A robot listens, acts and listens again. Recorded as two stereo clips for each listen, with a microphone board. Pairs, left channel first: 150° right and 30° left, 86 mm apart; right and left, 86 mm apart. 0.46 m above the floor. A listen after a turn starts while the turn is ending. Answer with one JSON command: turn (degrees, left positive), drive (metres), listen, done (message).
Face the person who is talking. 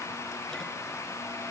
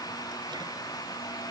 {"listen": true}
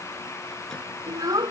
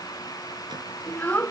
{"turn": -15}
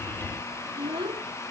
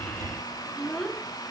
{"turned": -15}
{"done": "Found it: a child speaking, straight ahead."}